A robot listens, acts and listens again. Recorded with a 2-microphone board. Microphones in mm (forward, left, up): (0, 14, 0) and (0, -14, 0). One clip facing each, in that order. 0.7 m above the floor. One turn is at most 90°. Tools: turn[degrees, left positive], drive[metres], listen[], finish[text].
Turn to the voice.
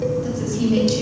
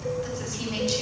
Action: turn[-30]
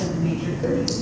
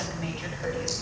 Thought: So it is at 145° right.
Action: turn[-90]
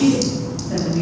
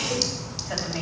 Thought: The woman speaking is now 50° right.
Action: turn[-50]
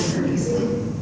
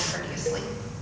Thought: The woman speaking is now 45° right.
Action: turn[-45]
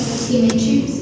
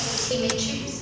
Thought: The woman speaking is now 20° right.
Action: turn[-20]
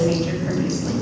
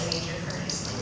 Action: finish[Found it: a woman speaking, straight ahead.]